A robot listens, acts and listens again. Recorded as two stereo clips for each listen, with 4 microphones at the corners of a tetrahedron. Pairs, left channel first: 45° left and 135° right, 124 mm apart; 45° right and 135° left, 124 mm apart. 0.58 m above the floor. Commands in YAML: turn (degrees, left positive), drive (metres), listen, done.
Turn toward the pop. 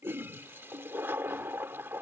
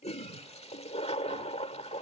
listen: true
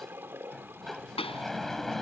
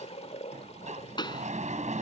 done: "Facing the pop."